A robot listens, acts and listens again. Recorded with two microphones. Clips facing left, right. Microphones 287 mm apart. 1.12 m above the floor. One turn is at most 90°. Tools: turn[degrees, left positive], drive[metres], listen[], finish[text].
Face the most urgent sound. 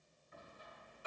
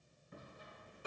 Action: listen[]
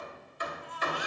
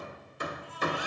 Thought: The baby crying: about 75° left or 105° left.
Action: turn[75]
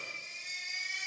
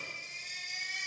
Thought: So it is at 25° left.
Action: turn[25]
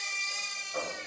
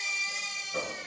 Action: finish[Facing the baby crying, 2 to 4 m away.]